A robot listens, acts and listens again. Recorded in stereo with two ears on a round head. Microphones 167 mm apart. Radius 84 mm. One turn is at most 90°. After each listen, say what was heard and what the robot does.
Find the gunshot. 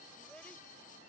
Keep listening.
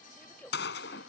The gunshot: about 65° left or 115° left. Turn 65° left.
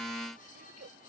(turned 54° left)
Keep listening.
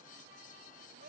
I heard a gunshot, but can't make it out now. It was about 10° left or 60° left.